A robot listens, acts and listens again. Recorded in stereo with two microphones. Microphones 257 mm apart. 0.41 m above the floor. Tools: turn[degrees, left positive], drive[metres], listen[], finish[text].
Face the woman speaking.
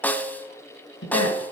Thought: The woman speaking: about 70° left or 110° left.
Action: turn[70]
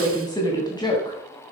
Thought: So it is at 20° left.
Action: turn[20]
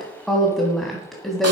Action: finish[Facing the woman speaking, 2 to 4 m away.]